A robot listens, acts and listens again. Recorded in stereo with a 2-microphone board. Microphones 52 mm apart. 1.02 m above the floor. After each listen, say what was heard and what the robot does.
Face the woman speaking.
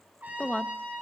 The woman speaking: about 25° left or 155° left. Turn 25° left.
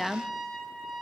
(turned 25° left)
Facing the woman speaking.